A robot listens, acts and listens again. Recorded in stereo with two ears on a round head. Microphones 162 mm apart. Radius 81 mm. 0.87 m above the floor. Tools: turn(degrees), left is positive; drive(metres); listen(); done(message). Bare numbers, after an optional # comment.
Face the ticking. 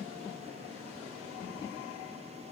listen()
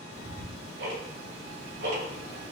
# The ticking: about 60° right or 120° right.
turn(-60)
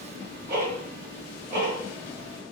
# So it is at 55° right.
turn(-55)
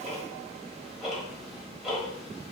done("Found it: ticking, straight ahead.")